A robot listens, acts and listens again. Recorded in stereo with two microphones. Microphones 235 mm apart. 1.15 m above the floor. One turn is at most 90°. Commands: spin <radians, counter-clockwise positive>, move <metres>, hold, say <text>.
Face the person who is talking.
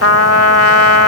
hold
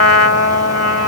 hold
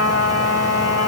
say I can't make out anyone speaking to turn to.